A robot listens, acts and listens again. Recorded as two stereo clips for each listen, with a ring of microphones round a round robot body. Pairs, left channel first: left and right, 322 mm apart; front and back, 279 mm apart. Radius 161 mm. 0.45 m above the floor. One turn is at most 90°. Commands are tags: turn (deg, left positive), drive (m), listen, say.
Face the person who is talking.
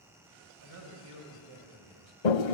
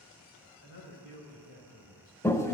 <turn deg="-50"/>
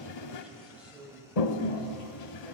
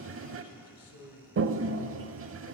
<say>Found it: a man speaking, straight ahead, 2 to 4 m away.</say>